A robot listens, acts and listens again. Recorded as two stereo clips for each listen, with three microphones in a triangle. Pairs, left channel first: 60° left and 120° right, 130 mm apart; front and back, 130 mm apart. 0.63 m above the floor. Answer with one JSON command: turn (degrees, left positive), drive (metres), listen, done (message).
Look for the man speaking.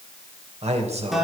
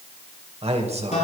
{"turn": -150}
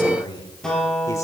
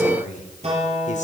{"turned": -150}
{"done": "Facing the man speaking."}